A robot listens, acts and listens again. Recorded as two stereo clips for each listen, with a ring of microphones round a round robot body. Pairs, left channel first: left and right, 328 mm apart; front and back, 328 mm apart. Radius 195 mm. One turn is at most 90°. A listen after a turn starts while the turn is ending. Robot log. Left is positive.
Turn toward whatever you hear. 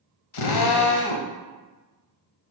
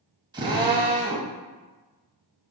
note: The drill: 100° left.
cmd yaw +90
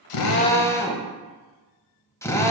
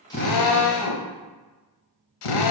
note: The drill is now 10° left.
cmd yaw +10
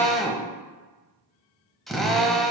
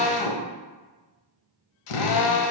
end: Facing the drill.